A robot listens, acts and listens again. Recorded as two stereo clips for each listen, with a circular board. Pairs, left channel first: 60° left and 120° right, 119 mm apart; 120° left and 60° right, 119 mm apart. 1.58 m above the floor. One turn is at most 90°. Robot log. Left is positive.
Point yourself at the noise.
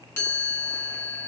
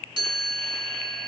note: The chime: 10° right.
cmd yaw -10
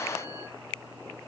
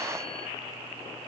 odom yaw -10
cmd idle
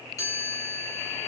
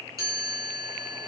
end: Found it: a chime, straight ahead, 2 to 4 m away.